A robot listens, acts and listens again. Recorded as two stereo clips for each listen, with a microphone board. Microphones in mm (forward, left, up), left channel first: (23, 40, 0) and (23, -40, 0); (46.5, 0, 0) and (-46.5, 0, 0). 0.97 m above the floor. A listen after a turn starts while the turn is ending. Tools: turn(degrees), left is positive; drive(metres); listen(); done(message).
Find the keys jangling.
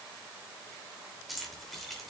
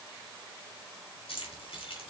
done("Facing the keys jangling, 2 to 4 m away.")